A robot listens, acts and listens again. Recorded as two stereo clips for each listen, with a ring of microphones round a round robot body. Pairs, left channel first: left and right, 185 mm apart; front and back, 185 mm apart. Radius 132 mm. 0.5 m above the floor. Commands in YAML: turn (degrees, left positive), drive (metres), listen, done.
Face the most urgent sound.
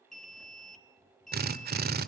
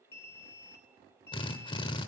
done: "Found it: an alarm, straight ahead."